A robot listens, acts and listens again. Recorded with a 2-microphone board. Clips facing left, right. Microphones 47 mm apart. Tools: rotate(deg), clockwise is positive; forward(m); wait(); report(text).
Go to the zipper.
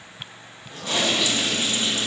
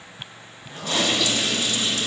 rotate(15)
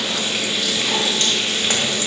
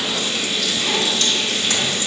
wait()
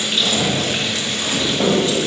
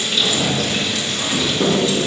forward(1.0)
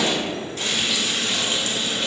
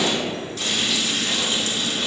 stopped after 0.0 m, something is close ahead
wait()
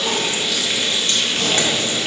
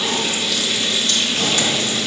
wait()
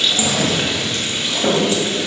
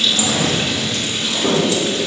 report("Something is in my way. I am facing the zipper but have not reached it.")